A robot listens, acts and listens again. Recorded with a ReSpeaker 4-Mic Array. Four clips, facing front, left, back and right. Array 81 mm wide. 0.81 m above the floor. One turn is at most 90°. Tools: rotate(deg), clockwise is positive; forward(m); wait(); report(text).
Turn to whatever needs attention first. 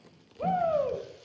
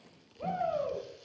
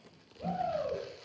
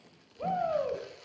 rotate(10)
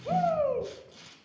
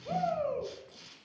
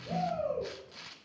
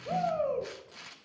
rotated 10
report("Facing the shout.")